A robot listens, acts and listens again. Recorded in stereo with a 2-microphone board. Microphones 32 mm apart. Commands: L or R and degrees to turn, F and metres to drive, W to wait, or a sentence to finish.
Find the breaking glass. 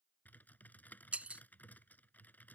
R50
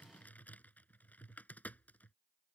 W
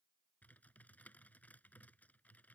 I heard breaking glass, but can't make it out now. It was about straight ahead or 80° right.